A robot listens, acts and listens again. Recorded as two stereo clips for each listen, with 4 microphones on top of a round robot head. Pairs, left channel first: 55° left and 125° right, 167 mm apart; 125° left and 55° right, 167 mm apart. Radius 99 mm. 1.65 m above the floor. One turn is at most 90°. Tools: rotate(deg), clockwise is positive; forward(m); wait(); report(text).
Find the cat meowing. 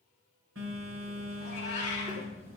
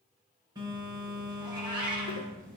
report("Facing the cat meowing, 2 to 4 m away.")